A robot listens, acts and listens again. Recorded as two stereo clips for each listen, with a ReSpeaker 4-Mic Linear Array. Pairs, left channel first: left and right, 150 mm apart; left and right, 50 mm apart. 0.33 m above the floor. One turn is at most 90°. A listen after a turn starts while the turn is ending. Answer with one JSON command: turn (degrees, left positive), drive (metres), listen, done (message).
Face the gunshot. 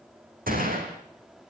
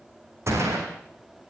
{"turn": -70}
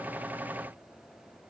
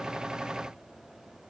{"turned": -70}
{"listen": true}
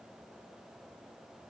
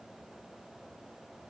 {"done": "I heard a gunshot, but can't make it out now. It was about straight ahead or 40° right."}